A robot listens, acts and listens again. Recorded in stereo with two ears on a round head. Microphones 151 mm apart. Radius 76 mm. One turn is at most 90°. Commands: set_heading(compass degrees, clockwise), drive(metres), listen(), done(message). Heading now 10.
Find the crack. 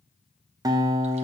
listen()
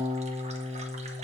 listen()
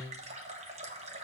done("I can't make out a crack, only a running tap and a guitar.")